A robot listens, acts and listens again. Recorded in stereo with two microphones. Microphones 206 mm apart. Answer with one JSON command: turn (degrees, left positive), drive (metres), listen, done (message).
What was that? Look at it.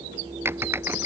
{"turn": -30}
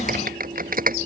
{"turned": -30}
{"turn": -135}
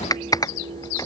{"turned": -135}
{"turn": 15}
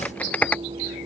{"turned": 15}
{"done": "Found it: typing on a keyboard, straight ahead."}